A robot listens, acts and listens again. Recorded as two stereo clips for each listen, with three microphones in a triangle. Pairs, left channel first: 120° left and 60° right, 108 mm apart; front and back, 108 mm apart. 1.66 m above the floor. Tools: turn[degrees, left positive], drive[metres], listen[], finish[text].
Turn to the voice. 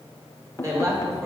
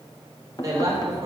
Thought: The woman speaking: 120° right.
Action: turn[-120]
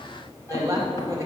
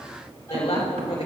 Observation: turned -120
Action: finish[Found it: a woman speaking, straight ahead, 2 to 4 m away.]